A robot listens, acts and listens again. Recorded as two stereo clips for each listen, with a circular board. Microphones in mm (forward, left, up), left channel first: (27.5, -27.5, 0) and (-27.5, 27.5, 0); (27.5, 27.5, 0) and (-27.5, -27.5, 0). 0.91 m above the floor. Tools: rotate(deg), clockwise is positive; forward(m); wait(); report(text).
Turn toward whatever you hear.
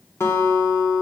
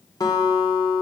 rotate(-10)
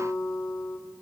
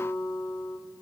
report("Facing the guitar, 1 to 2 m away.")